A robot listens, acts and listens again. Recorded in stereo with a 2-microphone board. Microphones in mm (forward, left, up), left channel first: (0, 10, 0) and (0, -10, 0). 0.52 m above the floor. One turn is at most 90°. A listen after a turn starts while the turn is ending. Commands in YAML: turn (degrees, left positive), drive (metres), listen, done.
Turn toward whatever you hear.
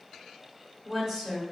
turn: -15
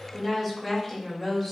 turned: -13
turn: 30
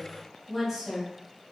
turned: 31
turn: -20
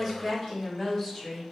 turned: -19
done: "Facing the woman speaking."